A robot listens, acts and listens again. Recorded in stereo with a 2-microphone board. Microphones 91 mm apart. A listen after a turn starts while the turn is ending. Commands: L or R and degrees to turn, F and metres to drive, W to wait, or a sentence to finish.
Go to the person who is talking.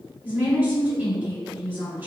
R15
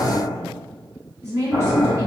R150
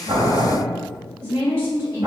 R35
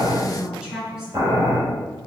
R15
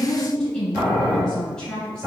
F1.0
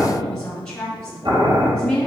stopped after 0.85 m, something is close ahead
L10
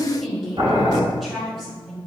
Arrived at the woman speaking, straight ahead.